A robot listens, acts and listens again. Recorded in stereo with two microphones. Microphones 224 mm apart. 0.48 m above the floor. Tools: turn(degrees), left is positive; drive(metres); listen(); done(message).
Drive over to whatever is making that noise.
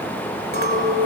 turn(degrees=-45)
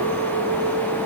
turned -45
turn(degrees=-85)
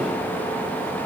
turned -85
listen()
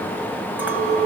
turn(degrees=-10)
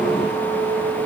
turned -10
drive(metres=1.0)
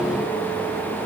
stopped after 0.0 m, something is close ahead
listen()
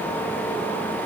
listen()
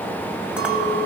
done("Blocked. The clink is further on, straight ahead.")